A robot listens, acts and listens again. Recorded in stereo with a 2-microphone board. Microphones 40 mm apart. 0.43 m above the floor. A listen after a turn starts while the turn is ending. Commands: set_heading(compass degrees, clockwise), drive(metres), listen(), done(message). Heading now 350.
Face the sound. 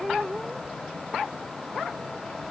listen()
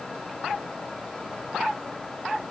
listen()
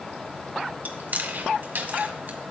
set_heading(45)
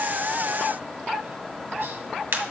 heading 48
set_heading(113)
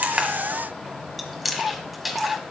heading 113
done("Facing the chewing.")